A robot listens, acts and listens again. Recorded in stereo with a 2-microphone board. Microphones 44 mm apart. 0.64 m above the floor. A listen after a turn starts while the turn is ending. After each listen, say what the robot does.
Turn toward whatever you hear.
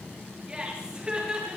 Turn 20° right.
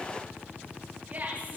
Turn 40° right.
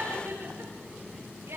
Turn 105° right.
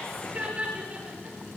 Turn 30° right.
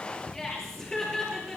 Turn 10° left.
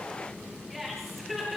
Facing the laughter.